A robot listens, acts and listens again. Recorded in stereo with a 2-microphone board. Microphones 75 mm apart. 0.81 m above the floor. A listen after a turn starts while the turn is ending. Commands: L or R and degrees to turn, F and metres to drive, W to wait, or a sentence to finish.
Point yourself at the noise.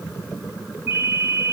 R25
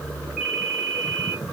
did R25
Found it: a ringtone, straight ahead.